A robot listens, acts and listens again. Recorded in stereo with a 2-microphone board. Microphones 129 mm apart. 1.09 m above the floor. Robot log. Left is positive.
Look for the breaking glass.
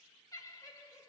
cmd idle
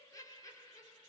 cmd idle
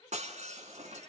note: The breaking glass: about 65° right or 115° right.
cmd yaw -65
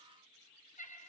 cmd idle
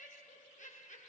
end: I heard breaking glass, but can't make it out now. It was about straight ahead or 50° right.